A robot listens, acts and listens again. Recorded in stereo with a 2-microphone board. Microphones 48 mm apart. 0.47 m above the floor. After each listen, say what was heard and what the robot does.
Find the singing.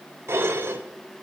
Keep listening.
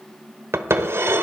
Keep listening.
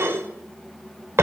I can't make out singing to turn to.